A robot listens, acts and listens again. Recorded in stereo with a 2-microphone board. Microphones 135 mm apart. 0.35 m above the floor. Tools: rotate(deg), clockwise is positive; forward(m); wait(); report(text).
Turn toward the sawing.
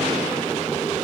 wait()
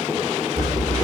rotate(-30)
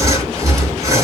rotate(30)
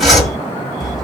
report("Found it: sawing, straight ahead, 1 to 2 m away.")